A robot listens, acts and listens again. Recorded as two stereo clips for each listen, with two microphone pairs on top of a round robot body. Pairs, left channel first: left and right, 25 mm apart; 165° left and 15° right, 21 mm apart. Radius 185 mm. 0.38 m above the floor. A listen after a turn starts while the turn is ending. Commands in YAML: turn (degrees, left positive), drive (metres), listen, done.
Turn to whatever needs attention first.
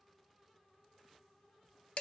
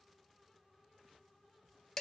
listen: true
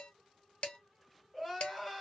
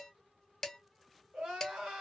done: "Found it: crying, straight ahead, 1 to 2 m away."